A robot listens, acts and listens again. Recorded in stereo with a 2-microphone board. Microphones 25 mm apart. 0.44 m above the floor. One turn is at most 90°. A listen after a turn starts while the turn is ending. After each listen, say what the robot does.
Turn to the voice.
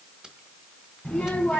Turn 90° left.
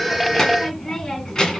Turn 25° left.
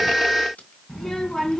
Turn 15° left.
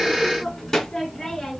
Turn 15° left.
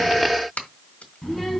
Found it: a child speaking, straight ahead, 2 to 4 m away.